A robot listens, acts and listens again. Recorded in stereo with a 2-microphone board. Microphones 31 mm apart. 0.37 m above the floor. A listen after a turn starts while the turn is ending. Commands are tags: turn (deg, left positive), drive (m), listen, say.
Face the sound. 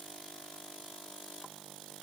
<listen/>
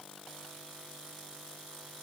<listen/>
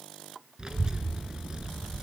<turn deg="-30"/>
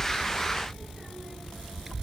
<say>Found it: a child speaking, straight ahead.</say>